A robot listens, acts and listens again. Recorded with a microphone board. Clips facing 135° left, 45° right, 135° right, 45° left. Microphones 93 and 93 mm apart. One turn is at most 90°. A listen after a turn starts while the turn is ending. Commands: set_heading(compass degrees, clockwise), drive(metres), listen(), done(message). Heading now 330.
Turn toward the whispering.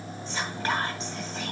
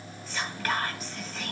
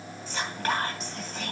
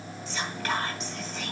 set_heading(60)
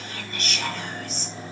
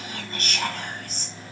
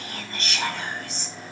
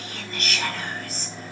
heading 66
set_heading(141)
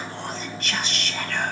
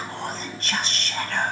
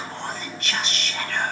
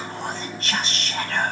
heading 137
done("Found it: whispering, straight ahead, 2 to 4 m away.")